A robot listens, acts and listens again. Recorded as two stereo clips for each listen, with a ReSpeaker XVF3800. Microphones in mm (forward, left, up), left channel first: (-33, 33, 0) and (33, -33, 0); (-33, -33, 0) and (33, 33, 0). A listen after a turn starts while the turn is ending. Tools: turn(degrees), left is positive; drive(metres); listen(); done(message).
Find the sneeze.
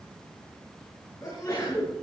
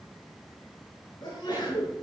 turn(degrees=-175)
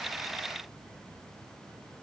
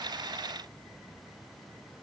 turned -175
done("Facing where the sneeze came from. I can't hear it now.")